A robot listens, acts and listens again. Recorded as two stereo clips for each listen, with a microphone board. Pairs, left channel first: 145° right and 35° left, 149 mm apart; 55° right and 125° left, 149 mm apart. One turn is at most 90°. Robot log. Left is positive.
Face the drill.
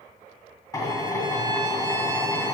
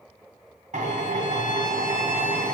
note: The drill: 150° left.
cmd yaw +90
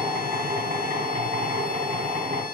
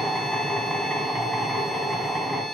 note: The drill is now 30° left.
cmd yaw +30
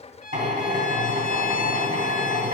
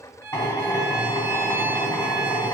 note: The drill is now 15° left.
cmd yaw +15
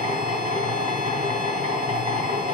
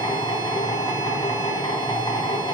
end: Facing the drill.